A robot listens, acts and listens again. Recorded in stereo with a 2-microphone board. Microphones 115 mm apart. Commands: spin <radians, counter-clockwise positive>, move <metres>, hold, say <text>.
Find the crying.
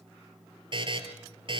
hold
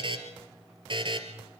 hold
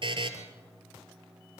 say I can't make out crying, only a buzzer.